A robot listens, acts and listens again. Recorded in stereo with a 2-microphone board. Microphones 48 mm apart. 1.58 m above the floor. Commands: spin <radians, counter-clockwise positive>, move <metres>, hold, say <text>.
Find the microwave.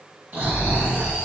hold
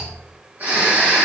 hold
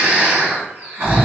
say I can't make out a microwave to turn to.